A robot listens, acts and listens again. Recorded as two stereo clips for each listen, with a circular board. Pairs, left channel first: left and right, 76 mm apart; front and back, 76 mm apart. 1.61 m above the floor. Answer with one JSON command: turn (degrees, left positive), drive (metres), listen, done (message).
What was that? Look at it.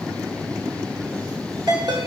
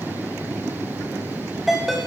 {"turn": -95}
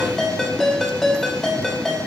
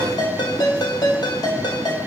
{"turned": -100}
{"done": "Facing the ringtone."}